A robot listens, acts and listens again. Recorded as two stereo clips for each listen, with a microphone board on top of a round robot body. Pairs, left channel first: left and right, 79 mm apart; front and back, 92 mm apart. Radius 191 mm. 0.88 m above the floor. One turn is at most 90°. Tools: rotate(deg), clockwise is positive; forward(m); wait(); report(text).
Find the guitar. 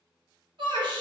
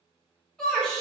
wait()
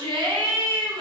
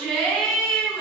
wait()
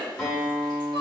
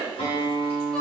report("Facing the guitar.")